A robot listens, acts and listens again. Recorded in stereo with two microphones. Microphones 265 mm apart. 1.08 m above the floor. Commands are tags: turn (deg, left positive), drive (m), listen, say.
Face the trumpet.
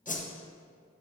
<listen/>
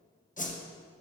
<listen/>
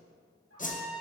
<turn deg="-60"/>
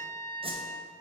<turn deg="-35"/>
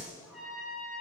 <say>Found it: a trumpet, straight ahead, 1 to 2 m away.</say>